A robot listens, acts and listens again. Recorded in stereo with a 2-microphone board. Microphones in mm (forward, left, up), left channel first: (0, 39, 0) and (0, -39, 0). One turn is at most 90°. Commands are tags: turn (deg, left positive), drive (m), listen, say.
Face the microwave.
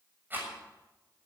<listen/>
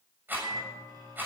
<turn deg="-60"/>
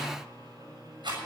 <turn deg="-60"/>
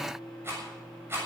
<say>Facing the microwave.</say>